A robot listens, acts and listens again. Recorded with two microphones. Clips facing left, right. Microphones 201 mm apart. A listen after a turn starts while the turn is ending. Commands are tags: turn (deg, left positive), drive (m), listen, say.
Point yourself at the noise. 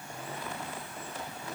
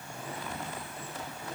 <listen/>
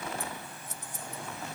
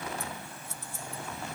<turn deg="20"/>
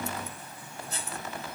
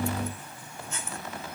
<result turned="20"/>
<turn deg="135"/>
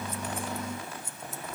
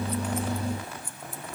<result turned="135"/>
<turn deg="25"/>
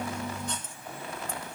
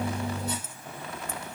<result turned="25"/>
<turn deg="-10"/>
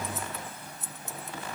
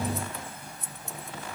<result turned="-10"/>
<say>Facing the scissors, 1 to 2 m away.</say>